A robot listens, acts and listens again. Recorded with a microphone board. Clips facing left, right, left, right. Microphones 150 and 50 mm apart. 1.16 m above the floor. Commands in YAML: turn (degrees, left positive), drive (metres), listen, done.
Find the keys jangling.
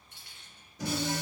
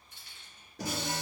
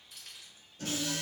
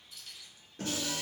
turn: 90
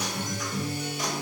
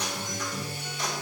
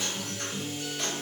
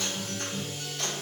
listen: true
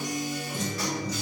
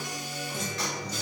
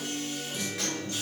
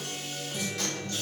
listen: true
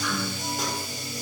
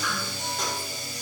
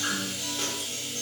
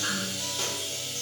done: "I heard keys jangling from this way, but can't make it out now."